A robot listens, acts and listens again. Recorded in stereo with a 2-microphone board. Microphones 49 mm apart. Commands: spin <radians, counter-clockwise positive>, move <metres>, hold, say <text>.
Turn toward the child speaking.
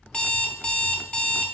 hold
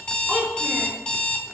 spin -0.35
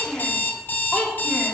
spin 0.35
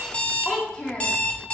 spin 0.35
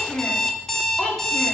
spin 0.35
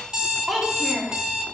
say Found it: a child speaking, straight ahead, 1 to 2 m away.